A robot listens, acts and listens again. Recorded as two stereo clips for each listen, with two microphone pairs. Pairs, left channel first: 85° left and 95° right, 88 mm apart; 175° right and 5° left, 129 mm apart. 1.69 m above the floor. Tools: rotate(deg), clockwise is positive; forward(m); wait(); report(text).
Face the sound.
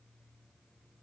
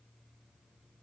wait()
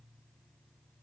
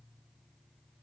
wait()
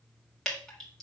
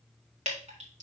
report("Found it: dripping, straight ahead.")